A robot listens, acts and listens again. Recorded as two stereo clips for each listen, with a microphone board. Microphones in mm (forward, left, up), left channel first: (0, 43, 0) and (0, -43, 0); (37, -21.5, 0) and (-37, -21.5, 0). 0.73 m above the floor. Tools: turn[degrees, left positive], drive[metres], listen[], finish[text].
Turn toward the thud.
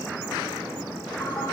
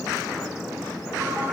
Action: listen[]
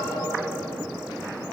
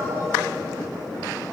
Action: listen[]
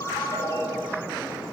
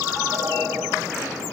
Action: finish[I can't make out a thud to turn to.]